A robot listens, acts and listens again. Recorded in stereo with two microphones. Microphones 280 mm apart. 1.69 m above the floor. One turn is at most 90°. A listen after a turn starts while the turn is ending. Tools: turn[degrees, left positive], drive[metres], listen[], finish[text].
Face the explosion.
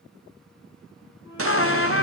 Thought: The explosion: about 50° right or 130° right.
Action: turn[-50]
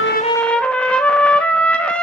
Action: listen[]
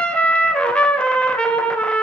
Action: finish[I heard an explosion, but can't make it out now. It was about straight ahead or 80° right.]